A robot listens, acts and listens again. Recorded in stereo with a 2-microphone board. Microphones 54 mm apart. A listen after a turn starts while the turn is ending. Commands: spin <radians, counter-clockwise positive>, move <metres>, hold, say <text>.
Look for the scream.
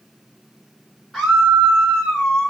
spin -0.52
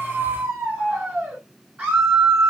spin -2.53
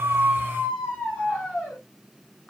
spin 0.44
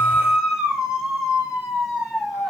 say Found it: a scream, straight ahead, 2 to 4 m away.